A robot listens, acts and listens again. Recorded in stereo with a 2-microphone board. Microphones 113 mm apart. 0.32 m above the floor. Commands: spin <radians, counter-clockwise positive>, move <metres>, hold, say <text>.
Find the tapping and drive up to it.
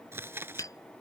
spin 0.52
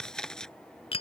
spin 2.09
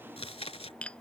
spin 0.17
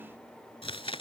hold
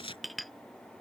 move 1.0
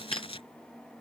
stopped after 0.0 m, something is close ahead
hold
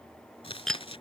say Something is in my way. I am facing the tapping but have not reached it.